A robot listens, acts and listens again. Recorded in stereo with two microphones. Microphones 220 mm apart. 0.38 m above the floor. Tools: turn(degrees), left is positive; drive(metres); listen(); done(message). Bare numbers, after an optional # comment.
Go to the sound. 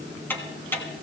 turn(30)
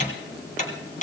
# So it is at 140° left.
turn(140)
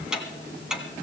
drive(1.0)
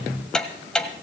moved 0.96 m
drive(1.0)
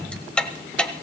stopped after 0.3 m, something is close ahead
done("Arrived at the ticking, straight ahead.")